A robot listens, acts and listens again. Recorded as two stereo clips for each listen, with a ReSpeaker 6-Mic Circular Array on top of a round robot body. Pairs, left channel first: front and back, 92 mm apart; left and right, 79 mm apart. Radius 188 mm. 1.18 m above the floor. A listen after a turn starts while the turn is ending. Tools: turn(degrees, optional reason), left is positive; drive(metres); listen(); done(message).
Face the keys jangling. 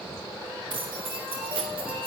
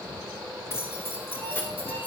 turn(degrees=155, reason="The keys jangling: 155° left.")
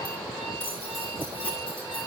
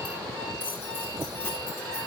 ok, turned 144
turn(degrees=30, reason="The keys jangling is now 30° left.")
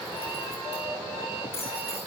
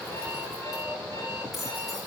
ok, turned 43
done("Facing the keys jangling.")